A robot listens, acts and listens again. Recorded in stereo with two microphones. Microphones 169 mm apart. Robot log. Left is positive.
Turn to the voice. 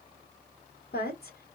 note: The woman speaking: about 65° left or 115° left.
cmd yaw +65
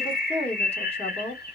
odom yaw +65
note: So it is at 40° left.
cmd yaw +40
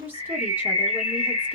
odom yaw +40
note: The woman speaking is now 10° right.
cmd yaw -10
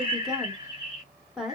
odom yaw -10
end: Facing the woman speaking, 1 to 2 m away.